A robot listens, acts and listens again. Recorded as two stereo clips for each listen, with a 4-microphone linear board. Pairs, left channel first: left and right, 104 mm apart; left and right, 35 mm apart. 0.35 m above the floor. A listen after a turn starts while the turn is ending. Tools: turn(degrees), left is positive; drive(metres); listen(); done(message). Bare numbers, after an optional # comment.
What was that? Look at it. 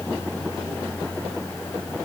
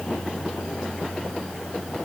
listen()
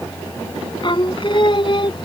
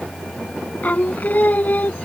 # The singing: about 50° left or 130° left.
turn(50)
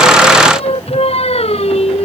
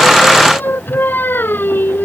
# So it is at 70° left.
turn(70)
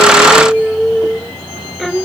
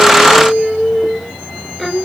done("Found it: singing, straight ahead.")